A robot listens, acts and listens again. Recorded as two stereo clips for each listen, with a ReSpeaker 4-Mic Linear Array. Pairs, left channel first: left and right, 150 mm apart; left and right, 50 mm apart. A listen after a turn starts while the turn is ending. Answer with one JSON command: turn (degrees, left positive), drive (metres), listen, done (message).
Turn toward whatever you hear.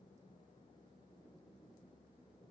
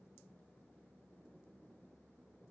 {"listen": true}
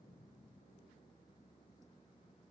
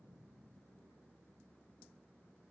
{"listen": true}
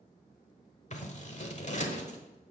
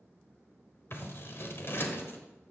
{"turn": 50}
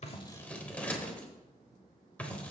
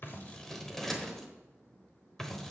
{"turn": 10}
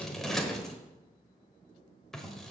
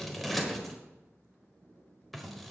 {"done": "Facing the scissors, 1 to 2 m away."}